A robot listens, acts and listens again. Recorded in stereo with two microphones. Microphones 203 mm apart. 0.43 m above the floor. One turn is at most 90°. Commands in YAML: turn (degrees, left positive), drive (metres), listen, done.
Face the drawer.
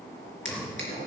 turn: 65
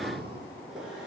listen: true
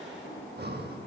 listen: true
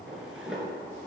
done: "Facing the drawer, 2 to 4 m away."